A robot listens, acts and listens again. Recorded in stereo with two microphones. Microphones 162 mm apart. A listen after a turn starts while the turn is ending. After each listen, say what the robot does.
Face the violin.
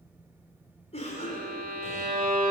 Turn 65° right.
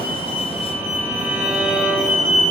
Turn 15° right.
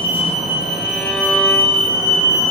Keep listening.
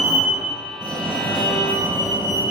Keep listening.
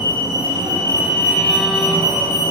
Facing where the violin came from. I can't hear it now.